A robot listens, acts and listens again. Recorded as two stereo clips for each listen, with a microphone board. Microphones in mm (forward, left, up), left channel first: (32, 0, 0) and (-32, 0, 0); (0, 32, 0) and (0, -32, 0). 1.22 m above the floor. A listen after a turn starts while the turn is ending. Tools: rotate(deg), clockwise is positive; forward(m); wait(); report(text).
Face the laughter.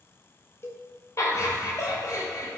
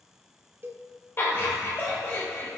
rotate(-35)
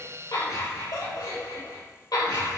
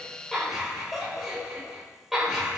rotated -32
rotate(10)
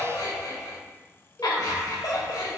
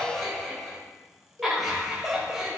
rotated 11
report("Facing the laughter, over 4 m away.")